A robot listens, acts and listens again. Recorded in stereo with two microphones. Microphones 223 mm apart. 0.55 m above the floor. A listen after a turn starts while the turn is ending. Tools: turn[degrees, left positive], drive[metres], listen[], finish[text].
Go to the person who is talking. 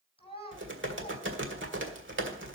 Thought: The child speaking: about 25° left or 155° left.
Action: turn[25]
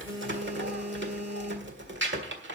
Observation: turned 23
Action: listen[]
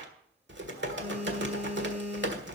Action: listen[]
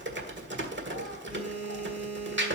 Action: finish[I heard a child speaking, but can't make it out now. It was about straight ahead or 135° left. I did not reach it.]